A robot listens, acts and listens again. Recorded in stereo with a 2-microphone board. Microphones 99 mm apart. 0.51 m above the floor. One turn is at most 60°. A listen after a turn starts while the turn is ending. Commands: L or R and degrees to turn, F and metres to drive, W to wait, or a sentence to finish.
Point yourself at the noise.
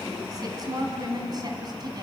R45
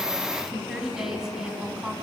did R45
R10
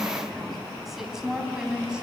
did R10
R10
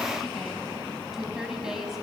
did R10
Facing the woman speaking, 2 to 4 m away.